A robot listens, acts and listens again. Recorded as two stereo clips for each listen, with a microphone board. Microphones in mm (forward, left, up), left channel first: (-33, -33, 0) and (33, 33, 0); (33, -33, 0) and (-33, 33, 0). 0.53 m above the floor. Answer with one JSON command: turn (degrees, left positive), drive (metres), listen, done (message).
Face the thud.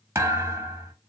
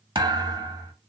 {"turn": 105}
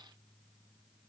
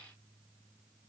{"done": "Facing where the thud came from. I can't hear it now."}